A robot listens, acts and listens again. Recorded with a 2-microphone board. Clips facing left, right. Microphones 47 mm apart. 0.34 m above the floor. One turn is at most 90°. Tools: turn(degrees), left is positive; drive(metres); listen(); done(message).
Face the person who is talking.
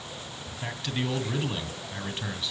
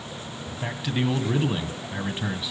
turn(degrees=-30)
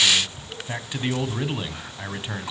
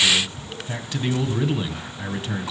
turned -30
turn(degrees=20)
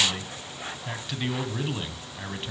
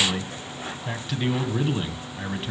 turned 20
done("Found it: a man speaking, straight ahead.")